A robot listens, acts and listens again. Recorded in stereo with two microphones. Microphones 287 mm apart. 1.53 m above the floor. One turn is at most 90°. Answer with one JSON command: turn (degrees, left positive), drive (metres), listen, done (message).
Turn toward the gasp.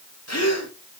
{"turn": 60}
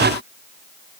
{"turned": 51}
{"listen": true}
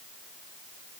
{"done": "I heard a gasp, but can't make it out now. It was about 10° left or 65° left."}